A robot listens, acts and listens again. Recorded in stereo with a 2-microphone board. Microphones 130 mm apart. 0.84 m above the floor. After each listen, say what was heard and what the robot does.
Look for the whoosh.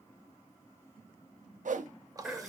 Turn 90° right.
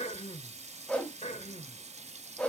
So it is at 10° left. Turn 10° left.
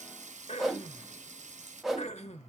Facing the whoosh, under 1 m away.